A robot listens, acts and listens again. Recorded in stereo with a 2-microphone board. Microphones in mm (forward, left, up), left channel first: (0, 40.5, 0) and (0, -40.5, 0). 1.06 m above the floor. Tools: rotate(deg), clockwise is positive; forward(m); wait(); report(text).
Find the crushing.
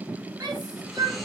wait()
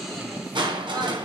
rotate(70)
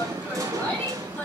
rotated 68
rotate(40)
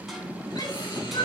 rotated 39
report("Facing the crushing.")